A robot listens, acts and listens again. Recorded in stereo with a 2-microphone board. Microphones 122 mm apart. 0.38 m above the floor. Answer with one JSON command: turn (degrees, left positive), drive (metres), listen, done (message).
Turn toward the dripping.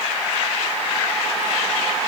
{"listen": true}
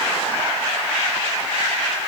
{"listen": true}
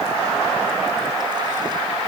{"done": "I can't make out dripping to turn to."}